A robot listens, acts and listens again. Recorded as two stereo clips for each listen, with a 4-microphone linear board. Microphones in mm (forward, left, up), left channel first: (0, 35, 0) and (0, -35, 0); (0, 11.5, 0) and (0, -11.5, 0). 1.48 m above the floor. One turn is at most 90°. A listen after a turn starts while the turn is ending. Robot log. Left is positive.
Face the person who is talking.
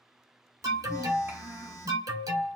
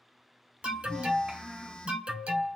note: The child speaking: about 40° right or 140° right.
cmd yaw -40
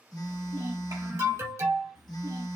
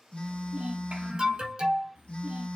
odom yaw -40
note: So it is at 100° right.
cmd yaw -90
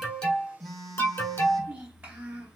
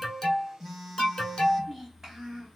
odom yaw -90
note: The child speaking is now 15° right.
cmd yaw -15
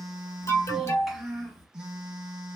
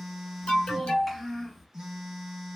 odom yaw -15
end: Facing the child speaking, 2 to 4 m away.